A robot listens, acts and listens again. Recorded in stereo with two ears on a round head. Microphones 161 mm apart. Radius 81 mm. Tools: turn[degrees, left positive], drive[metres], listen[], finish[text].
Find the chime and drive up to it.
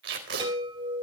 Thought: The chime: about 25° right or 155° right.
Action: turn[-25]
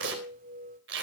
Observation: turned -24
Thought: So it is at 125° right.
Action: turn[-125]
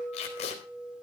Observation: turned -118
Action: drive[1.0]
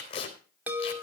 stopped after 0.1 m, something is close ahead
Thought: The chime is now 10° right.
Action: turn[-10]
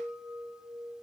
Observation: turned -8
Action: finish[Something is in my way. I am facing the chime but have not reached it.]